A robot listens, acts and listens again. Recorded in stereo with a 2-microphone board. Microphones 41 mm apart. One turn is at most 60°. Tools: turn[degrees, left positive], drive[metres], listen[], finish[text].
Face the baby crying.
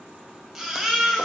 Action: turn[-30]
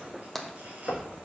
Action: listen[]
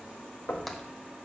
Action: listen[]
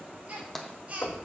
Thought: So it is at 145° right.
Action: turn[-60]
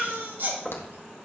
Thought: The baby crying is now 65° right.
Action: turn[-60]
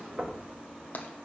Action: listen[]
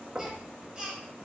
Thought: The baby crying is now 20° right.
Action: turn[-20]
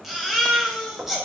Action: finish[Facing the baby crying.]